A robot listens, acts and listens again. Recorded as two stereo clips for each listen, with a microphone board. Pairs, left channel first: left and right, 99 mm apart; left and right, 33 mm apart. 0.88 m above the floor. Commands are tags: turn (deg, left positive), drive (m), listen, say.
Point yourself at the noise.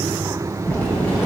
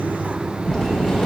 <turn deg="15"/>
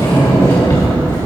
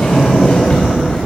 <turn deg="150"/>
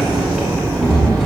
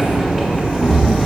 <say>Found it: a sliding door, straight ahead.</say>